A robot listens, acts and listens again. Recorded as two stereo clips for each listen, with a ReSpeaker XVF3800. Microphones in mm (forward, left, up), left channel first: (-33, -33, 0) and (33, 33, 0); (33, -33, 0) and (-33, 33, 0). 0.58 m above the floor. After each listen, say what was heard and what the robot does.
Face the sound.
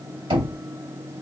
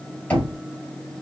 The knocking: 30° left. Turn 30° left.
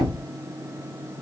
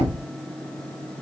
Facing the knocking.